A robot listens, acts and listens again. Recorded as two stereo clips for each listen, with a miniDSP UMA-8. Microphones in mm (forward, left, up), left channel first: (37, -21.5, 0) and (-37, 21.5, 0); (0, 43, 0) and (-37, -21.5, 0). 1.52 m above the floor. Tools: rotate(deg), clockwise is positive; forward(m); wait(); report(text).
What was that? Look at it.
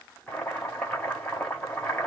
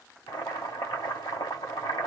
rotate(-50)
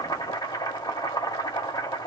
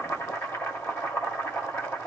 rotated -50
report("Found it: boiling, straight ahead, 1 to 2 m away.")